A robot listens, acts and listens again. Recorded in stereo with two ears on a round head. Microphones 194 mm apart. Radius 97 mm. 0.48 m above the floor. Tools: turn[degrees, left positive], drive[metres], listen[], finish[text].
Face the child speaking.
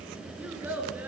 Action: turn[-30]
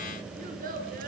Thought: So it is at 135° right.
Action: turn[-135]
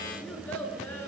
Thought: The child speaking is now 10° left.
Action: turn[10]
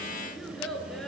Action: finish[Found it: a child speaking, straight ahead, over 4 m away.]